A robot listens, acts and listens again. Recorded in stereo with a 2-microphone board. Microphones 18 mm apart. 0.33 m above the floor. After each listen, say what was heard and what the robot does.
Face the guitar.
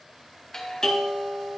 The guitar: about 30° right or 150° right. Turn 30° right.
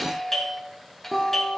Facing the guitar, over 4 m away.